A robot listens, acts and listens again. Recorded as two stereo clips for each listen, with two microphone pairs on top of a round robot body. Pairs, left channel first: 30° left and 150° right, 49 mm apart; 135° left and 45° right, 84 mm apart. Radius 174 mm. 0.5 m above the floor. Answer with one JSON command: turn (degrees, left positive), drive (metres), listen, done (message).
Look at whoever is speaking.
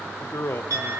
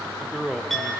{"turn": 45}
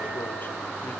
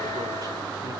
{"listen": true}
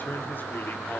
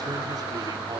{"listen": true}
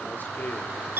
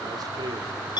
{"done": "I heard a man speaking from this way, but can't make it out now."}